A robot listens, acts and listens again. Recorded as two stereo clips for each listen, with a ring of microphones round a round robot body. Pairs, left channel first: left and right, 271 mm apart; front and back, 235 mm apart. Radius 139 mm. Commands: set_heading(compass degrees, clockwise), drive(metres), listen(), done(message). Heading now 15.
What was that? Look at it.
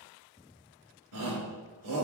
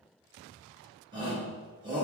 set_heading(125)
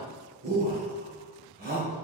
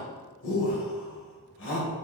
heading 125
set_heading(160)
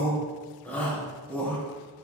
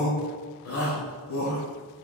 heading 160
done("Facing the shout.")